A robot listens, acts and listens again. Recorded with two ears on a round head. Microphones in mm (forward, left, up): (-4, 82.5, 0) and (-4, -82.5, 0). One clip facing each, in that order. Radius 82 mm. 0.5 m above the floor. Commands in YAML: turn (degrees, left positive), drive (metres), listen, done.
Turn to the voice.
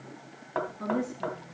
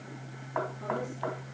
turn: 65
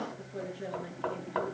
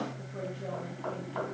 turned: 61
listen: true
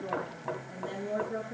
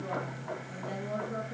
turn: 10
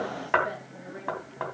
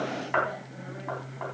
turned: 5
listen: true
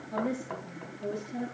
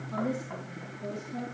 done: "Found it: a woman speaking, straight ahead."